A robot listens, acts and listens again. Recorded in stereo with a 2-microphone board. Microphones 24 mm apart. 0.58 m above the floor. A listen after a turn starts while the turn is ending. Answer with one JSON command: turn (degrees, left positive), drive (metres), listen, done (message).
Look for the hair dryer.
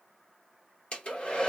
{"turn": 50}
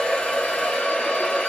{"turn": 70}
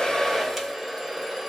{"done": "Facing the hair dryer."}